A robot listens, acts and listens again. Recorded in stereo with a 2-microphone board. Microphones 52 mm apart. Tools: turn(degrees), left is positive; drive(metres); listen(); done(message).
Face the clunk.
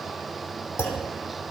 turn(degrees=65)
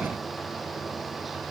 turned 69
listen()
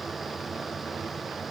done("I heard a clunk, but can't make it out now. It was about 5° right or 45° left.")